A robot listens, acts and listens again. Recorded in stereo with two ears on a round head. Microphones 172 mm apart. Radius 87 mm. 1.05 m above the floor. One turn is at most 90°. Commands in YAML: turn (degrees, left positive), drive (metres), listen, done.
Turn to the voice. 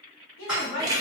turn: 70
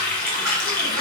listen: true
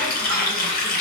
listen: true
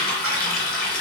done: "I heard a woman speaking, but can't make it out now. It was about straight ahead or 40° left."